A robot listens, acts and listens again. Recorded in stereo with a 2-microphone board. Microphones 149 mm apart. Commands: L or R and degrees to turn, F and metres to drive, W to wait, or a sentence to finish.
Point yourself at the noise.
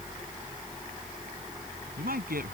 R90
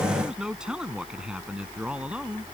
R10
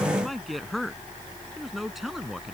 Facing the man speaking.